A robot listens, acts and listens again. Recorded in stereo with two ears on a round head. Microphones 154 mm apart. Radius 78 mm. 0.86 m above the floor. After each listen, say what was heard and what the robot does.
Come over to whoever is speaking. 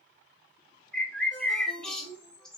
Turn 90° right.
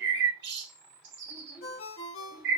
Keep listening.
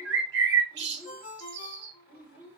The child speaking is now 15° right. Turn 15° right.
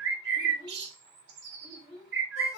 Drive 1.0 m forward.
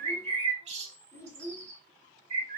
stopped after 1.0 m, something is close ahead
The child speaking is now 15° left. Turn 15° left.
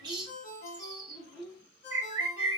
I am next to the child speaking.